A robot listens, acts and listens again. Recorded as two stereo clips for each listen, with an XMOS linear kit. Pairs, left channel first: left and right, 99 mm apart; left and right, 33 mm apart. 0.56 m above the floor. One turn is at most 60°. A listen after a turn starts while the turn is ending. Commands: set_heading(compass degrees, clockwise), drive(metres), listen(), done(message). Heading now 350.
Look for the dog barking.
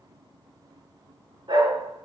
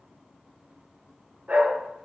set_heading(40)
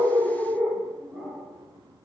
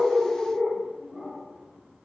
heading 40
done("Facing the dog barking, over 4 m away.")